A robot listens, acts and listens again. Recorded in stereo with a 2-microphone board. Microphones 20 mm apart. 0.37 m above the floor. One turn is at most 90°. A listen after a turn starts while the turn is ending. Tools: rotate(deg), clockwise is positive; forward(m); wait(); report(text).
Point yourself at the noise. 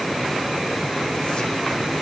wait()
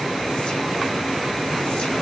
wait()
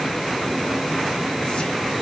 report("I can't make out anything.")